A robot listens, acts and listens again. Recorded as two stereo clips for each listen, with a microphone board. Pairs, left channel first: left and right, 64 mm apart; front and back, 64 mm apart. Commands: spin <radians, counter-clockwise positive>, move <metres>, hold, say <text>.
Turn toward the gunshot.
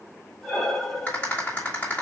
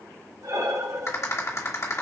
hold
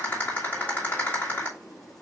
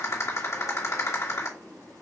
hold
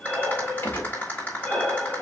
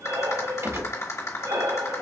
spin 2.53
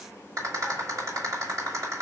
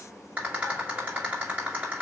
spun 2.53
say I heard a gunshot from this way, but can't make it out now.